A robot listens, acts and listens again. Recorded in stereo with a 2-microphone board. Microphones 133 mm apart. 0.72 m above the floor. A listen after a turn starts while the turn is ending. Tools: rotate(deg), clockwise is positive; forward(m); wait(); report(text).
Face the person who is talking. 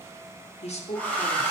rotate(-55)
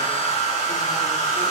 wait()
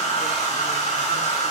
wait()
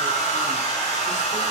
report("I heard a woman speaking, but can't make it out now. It was about straight ahead or 70° left.")